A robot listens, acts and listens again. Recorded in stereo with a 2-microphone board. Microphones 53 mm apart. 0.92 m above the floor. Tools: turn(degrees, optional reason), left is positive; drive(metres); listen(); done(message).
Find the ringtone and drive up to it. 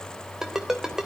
turn(degrees=-30)
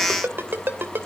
turn(degrees=-140, reason="So it is at 140° right.")
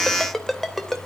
drive(metres=1.0)
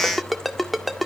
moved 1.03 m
drive(metres=1.0)
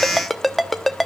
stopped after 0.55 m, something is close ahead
done("Arrived at the ringtone, straight ahead.")